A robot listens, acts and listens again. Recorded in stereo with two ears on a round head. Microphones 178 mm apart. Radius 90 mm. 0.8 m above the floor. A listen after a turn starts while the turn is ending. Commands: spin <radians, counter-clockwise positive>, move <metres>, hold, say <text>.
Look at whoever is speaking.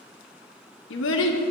spin 1.13
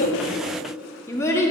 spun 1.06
spin 0.26
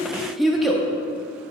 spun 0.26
say Facing the child speaking.